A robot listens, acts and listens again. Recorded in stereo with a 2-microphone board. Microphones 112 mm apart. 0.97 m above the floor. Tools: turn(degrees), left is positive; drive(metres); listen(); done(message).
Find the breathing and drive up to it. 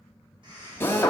turn(degrees=-45)
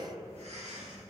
turn(degrees=-85)
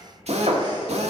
turn(degrees=-40)
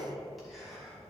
drive(metres=1.0)
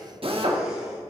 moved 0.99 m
listen()
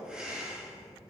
drive(metres=1.0)
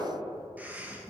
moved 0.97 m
turn(degrees=-20)
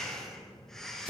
drive(metres=1.0)
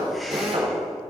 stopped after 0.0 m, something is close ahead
listen()
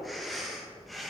done("I am next to the breathing.")